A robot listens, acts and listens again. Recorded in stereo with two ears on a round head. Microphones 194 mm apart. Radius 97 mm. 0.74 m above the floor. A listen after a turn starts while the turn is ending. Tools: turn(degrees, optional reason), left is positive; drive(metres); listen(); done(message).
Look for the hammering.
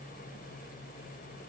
listen()
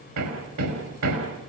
turn(degrees=-90)
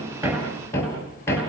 turn(degrees=10, reason="So it is at 10° left.")
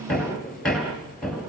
done("Found it: hammering, straight ahead, over 4 m away.")